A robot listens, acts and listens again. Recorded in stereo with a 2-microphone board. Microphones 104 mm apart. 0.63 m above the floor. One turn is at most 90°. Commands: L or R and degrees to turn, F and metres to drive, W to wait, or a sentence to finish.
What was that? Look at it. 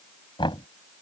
L50
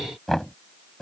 Facing the knocking.